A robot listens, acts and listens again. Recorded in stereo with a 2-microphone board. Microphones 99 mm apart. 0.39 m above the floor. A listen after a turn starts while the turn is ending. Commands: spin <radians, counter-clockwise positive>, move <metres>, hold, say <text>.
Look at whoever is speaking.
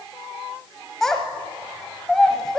spin 0.52
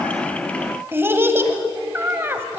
spin -0.44
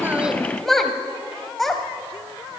say Facing the child speaking, 1 to 2 m away.